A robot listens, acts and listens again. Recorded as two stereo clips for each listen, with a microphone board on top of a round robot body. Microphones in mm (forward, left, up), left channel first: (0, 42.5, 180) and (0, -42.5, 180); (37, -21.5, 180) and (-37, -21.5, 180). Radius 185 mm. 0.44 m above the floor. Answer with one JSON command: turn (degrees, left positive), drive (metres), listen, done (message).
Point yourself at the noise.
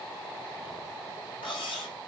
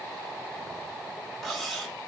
{"turn": 90}
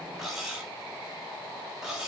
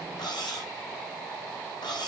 {"done": "Found it: cutlery clinking, straight ahead."}